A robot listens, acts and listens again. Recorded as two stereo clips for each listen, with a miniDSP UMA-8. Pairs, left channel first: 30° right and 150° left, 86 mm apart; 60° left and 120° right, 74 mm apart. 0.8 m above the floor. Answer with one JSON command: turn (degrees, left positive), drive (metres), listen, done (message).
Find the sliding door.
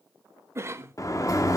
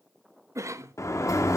{"turn": 15}
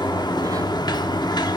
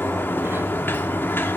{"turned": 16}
{"done": "Facing the sliding door."}